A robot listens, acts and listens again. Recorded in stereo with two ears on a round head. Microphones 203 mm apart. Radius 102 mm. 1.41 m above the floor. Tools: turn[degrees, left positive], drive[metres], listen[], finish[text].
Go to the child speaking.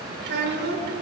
Thought: The child speaking: about 50° right or 130° right.
Action: turn[-50]
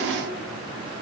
Action: listen[]
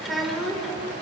Action: drive[1.0]
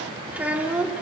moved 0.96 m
Action: drive[1.0]
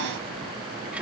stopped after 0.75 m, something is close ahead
Action: finish[Arrived at the child speaking, straight ahead.]